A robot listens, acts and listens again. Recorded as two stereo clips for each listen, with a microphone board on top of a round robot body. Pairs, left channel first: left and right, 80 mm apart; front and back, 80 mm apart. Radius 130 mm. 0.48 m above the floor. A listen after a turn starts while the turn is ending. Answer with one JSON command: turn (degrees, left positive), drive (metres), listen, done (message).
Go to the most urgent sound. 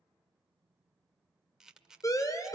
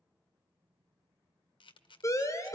{"turn": 45}
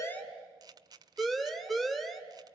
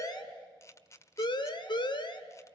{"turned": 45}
{"drive": 1.0}
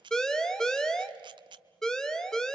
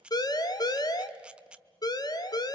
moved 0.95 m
{"turn": 10}
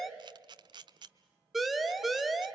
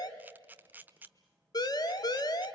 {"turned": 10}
{"drive": 1.0}
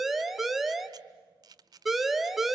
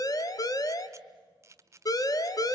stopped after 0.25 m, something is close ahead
{"done": "I am next to the siren."}